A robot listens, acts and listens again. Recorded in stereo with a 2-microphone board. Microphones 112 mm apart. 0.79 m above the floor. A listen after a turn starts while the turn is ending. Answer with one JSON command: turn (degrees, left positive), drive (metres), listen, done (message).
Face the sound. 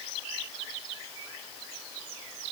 {"listen": true}
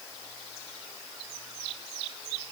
{"listen": true}
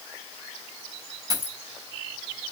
{"turn": -35}
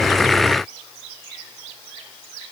{"listen": true}
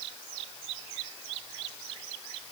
{"done": "I heard a dropped coin, but can't make it out now. It was about straight ahead or 110° right."}